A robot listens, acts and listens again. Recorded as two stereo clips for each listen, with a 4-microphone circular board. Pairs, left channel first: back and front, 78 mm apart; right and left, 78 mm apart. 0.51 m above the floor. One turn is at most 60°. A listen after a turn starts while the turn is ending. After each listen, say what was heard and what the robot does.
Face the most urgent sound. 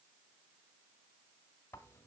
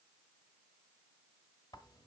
Keep listening.
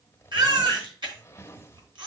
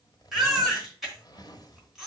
Found it: a baby crying, straight ahead, 2 to 4 m away.